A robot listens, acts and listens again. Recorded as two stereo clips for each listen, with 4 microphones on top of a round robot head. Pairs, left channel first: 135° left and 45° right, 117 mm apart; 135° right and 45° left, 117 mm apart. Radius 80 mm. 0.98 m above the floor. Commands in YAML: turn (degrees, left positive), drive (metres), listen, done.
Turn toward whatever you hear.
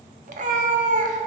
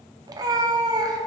turn: -15
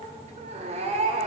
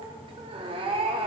done: "Found it: a cat meowing, straight ahead, under 1 m away."